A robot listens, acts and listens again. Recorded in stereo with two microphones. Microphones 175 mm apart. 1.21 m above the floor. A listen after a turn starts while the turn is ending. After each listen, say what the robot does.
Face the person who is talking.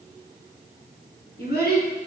Turn 70° left.
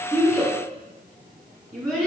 Facing the child speaking.